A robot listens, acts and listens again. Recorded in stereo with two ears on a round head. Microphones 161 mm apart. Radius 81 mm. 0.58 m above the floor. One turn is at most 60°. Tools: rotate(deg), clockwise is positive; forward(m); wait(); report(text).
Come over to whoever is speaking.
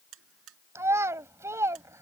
rotate(15)
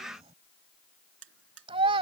rotate(60)
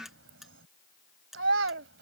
rotate(60)
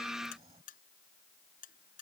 rotate(20)
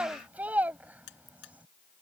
rotate(10)
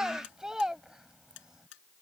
forward(1.0)
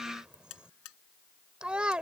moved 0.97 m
forward(1.0)
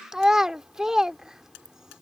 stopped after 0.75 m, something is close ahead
report("Arrived at the child speaking, straight ahead.")